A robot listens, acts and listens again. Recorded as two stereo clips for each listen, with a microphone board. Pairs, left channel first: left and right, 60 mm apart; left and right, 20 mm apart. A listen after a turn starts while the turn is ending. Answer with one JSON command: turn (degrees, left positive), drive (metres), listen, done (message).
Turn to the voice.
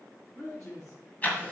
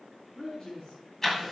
{"turn": 60}
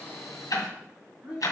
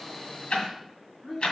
{"done": "Found it: a man speaking, straight ahead."}